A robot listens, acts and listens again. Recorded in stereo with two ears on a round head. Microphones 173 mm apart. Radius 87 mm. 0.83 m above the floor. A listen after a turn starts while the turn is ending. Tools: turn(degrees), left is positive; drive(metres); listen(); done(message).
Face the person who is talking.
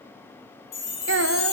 turn(degrees=-65)
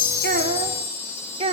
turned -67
turn(degrees=-30)
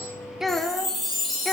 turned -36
done("Facing the child speaking.")